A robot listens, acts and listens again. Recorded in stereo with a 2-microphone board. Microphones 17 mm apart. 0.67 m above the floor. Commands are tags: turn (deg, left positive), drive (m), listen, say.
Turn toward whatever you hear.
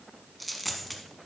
<turn deg="30"/>
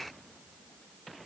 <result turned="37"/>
<listen/>
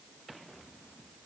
<say>I heard a dropped coin, but can't make it out now. It was about 40° right or 145° left.</say>